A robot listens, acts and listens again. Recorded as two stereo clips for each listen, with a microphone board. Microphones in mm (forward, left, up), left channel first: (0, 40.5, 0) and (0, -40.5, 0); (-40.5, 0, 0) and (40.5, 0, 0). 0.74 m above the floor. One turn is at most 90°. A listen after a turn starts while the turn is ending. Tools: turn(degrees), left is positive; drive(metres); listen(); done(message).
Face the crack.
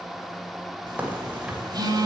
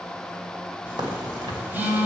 turn(degrees=-20)
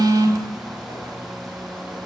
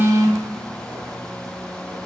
done("Facing where the crack came from. I can't hear it now.")